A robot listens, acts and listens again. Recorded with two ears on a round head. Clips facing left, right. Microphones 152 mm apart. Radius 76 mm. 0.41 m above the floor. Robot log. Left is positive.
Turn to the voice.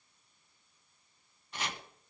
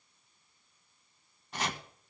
cmd idle
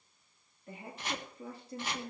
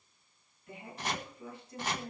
note: The woman speaking: about 35° left or 145° left.
cmd yaw +35
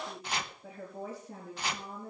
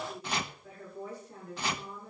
note: So it is at 110° left.
cmd yaw +110
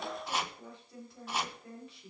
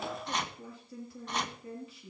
end: Facing the woman speaking, over 4 m away.